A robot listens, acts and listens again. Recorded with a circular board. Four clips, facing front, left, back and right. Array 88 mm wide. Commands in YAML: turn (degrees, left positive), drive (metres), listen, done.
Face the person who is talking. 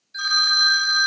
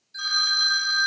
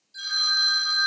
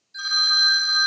listen: true
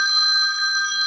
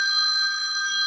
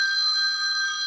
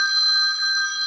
listen: true
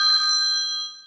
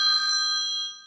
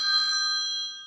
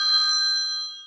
done: "I can't make out anyone speaking to turn to."